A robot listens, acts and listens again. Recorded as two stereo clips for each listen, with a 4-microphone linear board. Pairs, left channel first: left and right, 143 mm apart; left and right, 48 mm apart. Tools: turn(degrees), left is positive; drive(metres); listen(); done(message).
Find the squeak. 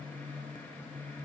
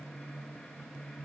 listen()
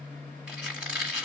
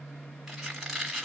turn(degrees=-30)
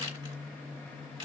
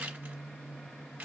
turn(degrees=-145)
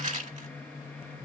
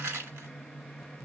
turn(degrees=-55)
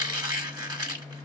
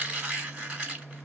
turn(degrees=-25)
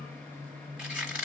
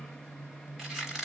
done("Facing the squeak, 1 to 2 m away.")